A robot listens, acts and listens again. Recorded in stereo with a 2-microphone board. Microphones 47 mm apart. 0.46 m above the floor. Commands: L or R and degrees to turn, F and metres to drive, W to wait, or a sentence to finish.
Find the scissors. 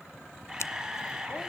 L75
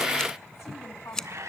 L15
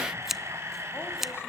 Found it: scissors, straight ahead, under 1 m away.